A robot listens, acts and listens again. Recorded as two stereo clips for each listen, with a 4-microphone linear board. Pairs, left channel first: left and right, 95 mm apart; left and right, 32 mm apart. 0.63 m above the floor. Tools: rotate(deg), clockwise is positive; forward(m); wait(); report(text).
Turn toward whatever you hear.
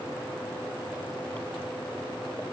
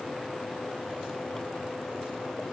wait()
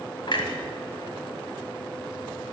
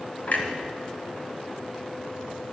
rotate(-60)
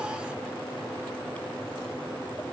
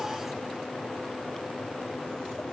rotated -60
wait()
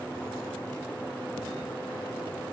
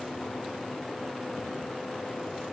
report("I heard a clunk, but can't make it out now. It was about straight ahead or 60° left.")